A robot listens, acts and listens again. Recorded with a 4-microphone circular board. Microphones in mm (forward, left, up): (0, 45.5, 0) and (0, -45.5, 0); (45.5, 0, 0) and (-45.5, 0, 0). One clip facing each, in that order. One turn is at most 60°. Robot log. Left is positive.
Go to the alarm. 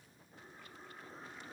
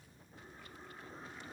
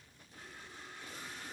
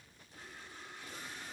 cmd idle
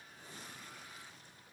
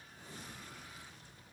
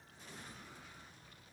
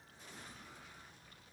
cmd idle
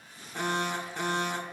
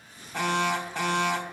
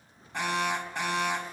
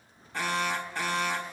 note: The alarm: 75° right.
cmd yaw -60
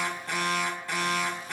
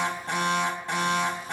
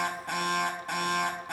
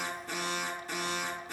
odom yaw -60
note: The alarm is now 25° right.
cmd yaw -25
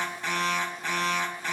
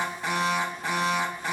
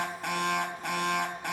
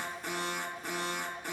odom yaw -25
note: The alarm is now 10° right.
cmd yaw -10
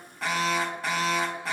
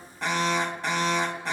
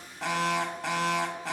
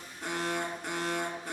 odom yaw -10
cmd fwd 1.0
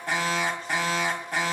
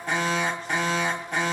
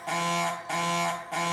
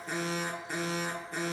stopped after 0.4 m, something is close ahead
end: Something is in my way. I am facing the alarm but have not reached it.